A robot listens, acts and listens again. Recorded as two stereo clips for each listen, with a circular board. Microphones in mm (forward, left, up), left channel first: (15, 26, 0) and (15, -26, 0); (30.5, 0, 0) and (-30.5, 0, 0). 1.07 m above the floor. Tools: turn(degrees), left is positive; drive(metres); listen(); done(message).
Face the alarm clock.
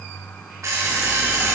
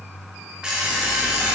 turn(degrees=-105)
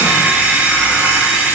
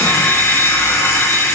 turn(degrees=-35)
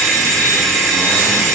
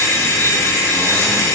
done("Found it: an alarm clock, straight ahead, 1 to 2 m away.")